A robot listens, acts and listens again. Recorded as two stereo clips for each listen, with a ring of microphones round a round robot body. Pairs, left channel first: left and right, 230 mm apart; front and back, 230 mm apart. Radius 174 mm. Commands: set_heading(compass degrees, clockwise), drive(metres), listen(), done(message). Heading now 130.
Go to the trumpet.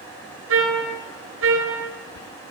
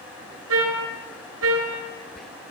set_heading(265)
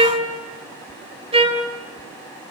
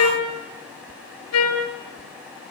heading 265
set_heading(290)
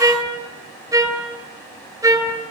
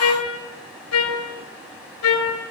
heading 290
set_heading(305)
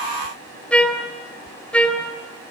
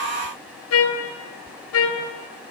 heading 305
drive(1.0)
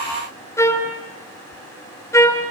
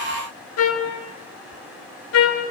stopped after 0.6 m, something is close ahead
set_heading(295)
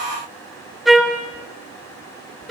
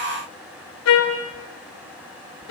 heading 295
done("Blocked. The trumpet is further on, straight ahead.")